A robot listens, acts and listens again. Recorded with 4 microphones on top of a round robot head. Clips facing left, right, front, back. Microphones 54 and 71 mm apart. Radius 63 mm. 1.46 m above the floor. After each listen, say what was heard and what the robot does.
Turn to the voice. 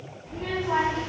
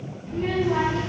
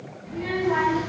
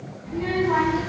The child speaking: 120° left. Turn 120° left.
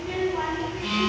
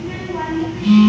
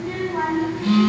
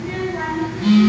The child speaking is now 30° right. Turn 30° right.
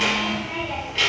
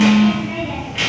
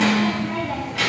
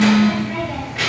The child speaking is now 15° right. Turn 15° right.
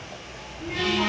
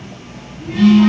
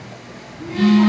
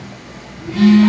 Found it: a child speaking, straight ahead.